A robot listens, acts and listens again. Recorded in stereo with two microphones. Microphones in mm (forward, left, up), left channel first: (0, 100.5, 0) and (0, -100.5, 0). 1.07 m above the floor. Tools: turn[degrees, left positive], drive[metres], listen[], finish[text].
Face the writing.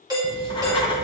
Thought: The writing: about 25° left or 155° left.
Action: turn[25]
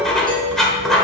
Action: finish[Facing the writing, 1 to 2 m away.]